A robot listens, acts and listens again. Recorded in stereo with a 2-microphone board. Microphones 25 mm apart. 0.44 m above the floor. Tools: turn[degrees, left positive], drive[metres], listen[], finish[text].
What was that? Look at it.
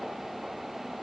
Action: listen[]
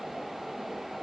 Action: listen[]
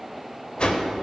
Thought: The whoosh: about 45° left or 135° left.
Action: turn[45]
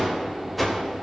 Action: finish[Facing the whoosh.]